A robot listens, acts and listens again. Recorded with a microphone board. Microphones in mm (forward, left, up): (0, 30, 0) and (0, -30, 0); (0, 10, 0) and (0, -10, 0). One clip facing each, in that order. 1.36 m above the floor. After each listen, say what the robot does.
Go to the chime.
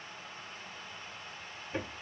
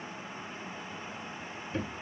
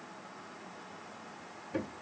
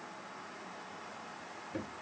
Keep listening.
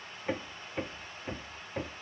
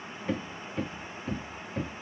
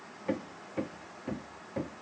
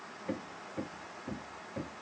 Keep listening.
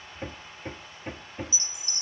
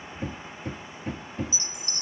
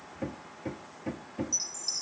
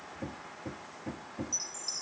Turn 25° left.
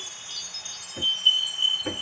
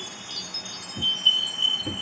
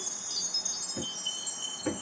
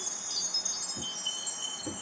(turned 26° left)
Drive 1.0 m forward.
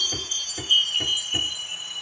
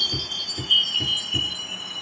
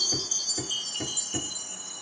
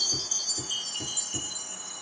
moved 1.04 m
Drive 1.0 m forward.
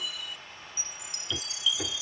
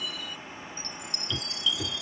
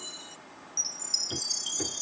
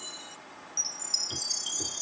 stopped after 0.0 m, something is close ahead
Arrived at the chime, straight ahead.